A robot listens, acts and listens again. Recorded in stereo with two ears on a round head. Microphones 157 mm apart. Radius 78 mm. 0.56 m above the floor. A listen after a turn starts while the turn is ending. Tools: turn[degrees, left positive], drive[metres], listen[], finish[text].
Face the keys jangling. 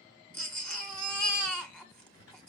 Action: listen[]
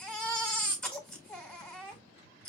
Action: listen[]
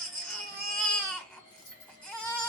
Thought: The keys jangling: about 65° left or 115° left.
Action: turn[65]
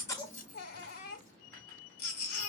Action: listen[]
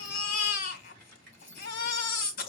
Action: finish[Facing the keys jangling, over 4 m away.]